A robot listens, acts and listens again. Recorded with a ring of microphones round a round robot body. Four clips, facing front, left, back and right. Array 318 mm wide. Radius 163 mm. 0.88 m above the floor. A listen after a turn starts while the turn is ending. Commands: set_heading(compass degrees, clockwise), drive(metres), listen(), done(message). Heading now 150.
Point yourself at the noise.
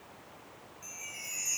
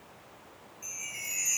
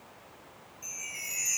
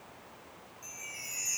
set_heading(15)
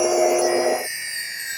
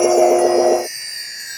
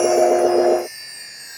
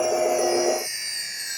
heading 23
done("Found it: a chime, straight ahead.")